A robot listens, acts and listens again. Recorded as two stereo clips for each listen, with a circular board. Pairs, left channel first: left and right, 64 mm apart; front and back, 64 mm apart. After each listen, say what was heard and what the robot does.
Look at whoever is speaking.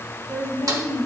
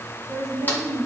The woman speaking: 145° right. Turn 145° right.
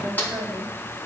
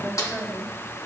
The woman speaking is now 55° right. Turn 55° right.
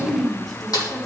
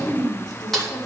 Facing the woman speaking, 2 to 4 m away.